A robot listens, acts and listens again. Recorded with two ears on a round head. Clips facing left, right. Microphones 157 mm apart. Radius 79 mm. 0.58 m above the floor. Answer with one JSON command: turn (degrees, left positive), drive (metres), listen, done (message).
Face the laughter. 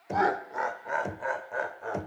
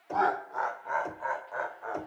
{"turn": 30}
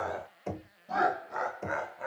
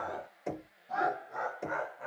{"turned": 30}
{"turn": 110}
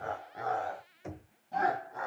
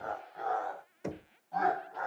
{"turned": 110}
{"turn": 20}
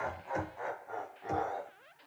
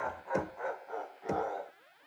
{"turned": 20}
{"done": "Found it: laughter, straight ahead."}